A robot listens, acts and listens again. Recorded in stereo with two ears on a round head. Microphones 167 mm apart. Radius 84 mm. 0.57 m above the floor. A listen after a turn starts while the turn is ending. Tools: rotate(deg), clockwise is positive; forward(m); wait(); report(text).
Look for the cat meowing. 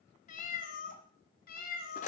rotate(-55)
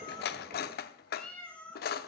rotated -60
rotate(-10)
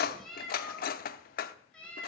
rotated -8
report("Facing the cat meowing, 2 to 4 m away.")